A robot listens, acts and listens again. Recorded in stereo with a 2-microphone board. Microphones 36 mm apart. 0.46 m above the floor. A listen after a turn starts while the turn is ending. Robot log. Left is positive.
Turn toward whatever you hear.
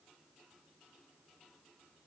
cmd idle
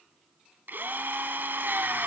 note: The drill: about 70° right or 110° right.
cmd yaw -70
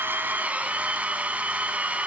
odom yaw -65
note: So it is at 45° right.
cmd yaw -45
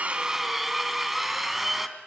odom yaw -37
end: Found it: a drill, straight ahead, 1 to 2 m away.